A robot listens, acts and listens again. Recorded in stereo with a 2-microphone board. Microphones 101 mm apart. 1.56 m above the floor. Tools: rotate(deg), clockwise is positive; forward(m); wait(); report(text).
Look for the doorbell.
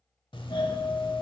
rotate(-55)
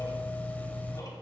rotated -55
rotate(-20)
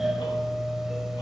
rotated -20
report("Facing the doorbell.")